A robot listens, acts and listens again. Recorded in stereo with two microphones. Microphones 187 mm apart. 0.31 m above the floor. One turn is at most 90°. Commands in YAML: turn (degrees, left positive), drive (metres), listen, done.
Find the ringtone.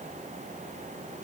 listen: true
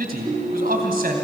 turn: -30
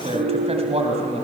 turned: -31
turn: -90
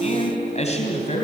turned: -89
turn: -30
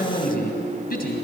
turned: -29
done: "Found it: a ringtone, straight ahead, over 4 m away."